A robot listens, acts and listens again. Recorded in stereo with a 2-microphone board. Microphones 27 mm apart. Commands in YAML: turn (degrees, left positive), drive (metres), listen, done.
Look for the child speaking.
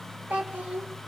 turn: -65
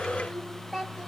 turn: -10
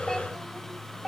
done: "Facing the child speaking."